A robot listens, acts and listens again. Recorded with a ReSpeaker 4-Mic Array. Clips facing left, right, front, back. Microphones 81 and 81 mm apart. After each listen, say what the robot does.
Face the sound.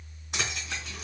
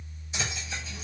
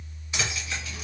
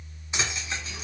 Turn 115° left.
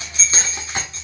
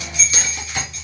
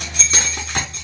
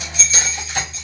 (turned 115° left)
Turn 35° left.
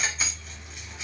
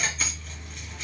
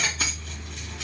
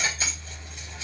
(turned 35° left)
Turn 10° left.
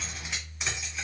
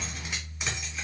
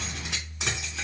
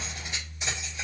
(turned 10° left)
Found it: keys jangling, straight ahead.